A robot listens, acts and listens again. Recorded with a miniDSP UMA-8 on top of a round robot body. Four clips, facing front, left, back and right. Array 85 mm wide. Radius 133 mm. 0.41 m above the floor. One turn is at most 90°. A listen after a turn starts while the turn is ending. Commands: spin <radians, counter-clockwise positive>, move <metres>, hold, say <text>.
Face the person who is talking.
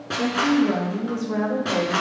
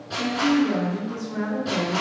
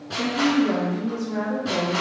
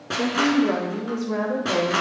spin -1.22
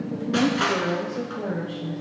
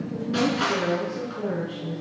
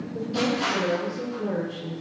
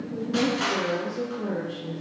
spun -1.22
spin 0.17
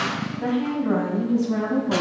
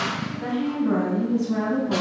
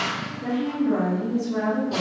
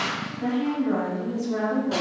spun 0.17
say Facing the woman speaking, 2 to 4 m away.